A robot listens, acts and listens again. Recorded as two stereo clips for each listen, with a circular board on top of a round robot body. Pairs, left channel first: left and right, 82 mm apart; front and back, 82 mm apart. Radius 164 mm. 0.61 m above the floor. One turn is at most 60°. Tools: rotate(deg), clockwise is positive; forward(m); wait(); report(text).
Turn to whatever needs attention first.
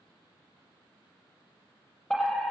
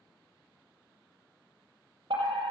rotate(-60)
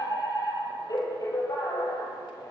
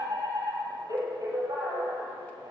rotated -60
rotate(-60)
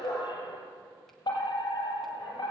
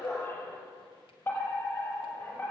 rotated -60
rotate(-60)
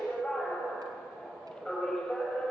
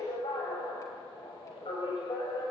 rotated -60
rotate(-10)
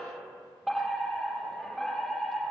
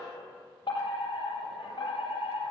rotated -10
report("Found it: a fire alarm, straight ahead.")